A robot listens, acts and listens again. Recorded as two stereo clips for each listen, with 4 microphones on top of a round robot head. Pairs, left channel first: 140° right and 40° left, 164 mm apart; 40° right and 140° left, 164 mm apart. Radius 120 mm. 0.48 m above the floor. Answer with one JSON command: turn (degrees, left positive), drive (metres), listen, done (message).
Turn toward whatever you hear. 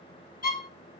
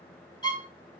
{"turn": -105}
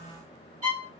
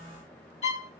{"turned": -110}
{"done": "Found it: a violin, straight ahead."}